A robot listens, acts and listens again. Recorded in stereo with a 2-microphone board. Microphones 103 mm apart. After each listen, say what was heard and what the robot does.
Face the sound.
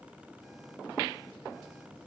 Keep listening.
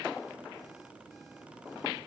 Keep listening.
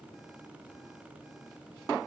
I can't make out anything to turn to.